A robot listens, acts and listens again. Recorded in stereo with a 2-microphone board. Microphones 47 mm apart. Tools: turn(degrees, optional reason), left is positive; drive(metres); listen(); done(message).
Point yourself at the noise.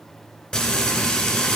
turn(degrees=25, reason="The frying: about 25° left or 155° left.")
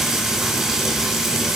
done("Facing the frying.")